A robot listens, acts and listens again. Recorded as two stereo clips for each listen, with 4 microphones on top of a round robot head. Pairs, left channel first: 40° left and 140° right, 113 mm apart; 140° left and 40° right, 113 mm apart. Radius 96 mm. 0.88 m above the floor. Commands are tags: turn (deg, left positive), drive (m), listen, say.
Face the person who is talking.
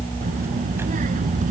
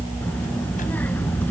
<turn deg="-140"/>
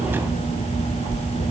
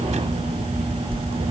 <say>Found it: a child speaking, straight ahead.</say>